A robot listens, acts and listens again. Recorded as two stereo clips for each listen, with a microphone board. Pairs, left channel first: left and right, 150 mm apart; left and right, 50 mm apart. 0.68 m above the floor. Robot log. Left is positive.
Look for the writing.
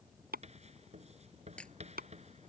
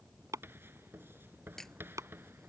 note: The writing: about 45° right or 135° right.
cmd yaw -45
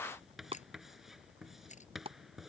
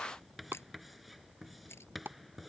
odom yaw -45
end: Facing the writing.